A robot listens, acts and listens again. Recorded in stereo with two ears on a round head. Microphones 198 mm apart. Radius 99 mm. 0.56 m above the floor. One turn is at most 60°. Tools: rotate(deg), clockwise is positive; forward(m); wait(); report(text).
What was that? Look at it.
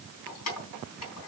rotate(-60)
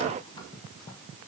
rotate(-30)
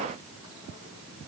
wait()
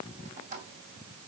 rotate(30)
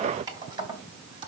rotate(25)
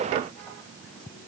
wait()
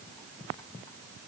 wait()
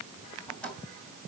report("Found it: keys jangling, straight ahead.")